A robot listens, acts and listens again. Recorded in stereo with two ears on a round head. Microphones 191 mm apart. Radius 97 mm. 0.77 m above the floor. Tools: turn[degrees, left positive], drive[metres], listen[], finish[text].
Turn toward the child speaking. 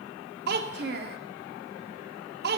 Thought: The child speaking: about 45° right or 135° right.
Action: turn[-45]
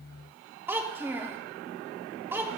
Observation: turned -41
Thought: So it is at 10° right.
Action: turn[-10]
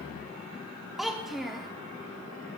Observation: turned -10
Action: finish[Facing the child speaking, under 1 m away.]